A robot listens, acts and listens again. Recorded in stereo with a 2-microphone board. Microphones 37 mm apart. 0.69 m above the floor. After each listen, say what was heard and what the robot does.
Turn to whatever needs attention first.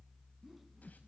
Keep listening.
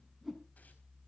Keep listening.
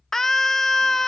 Turn 30° left.
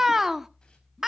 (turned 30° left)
So it is at 15° right. Turn 15° right.
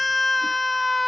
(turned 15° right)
Facing the scream.